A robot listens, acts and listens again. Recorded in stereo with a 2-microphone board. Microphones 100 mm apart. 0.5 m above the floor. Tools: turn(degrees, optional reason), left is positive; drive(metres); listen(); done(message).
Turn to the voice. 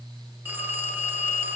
listen()
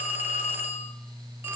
listen()
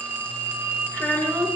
turn(degrees=15, reason="The child speaking: about 15° left or 165° left.")
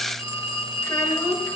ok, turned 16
listen()
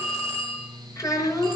turn(degrees=150, reason="So it is at 150° left.")
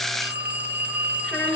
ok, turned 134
turn(degrees=15, reason="The child speaking is now 15° left.")
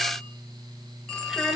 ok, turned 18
done("Facing the child speaking.")